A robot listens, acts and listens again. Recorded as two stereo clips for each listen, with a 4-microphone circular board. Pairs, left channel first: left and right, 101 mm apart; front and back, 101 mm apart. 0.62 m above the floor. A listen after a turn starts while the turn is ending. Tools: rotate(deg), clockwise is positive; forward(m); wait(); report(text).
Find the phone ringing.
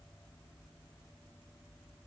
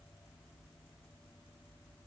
wait()
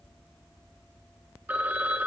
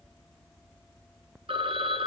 rotate(160)
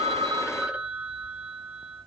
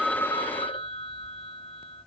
rotate(15)
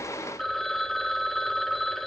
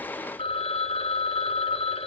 report("Facing the phone ringing, 1 to 2 m away.")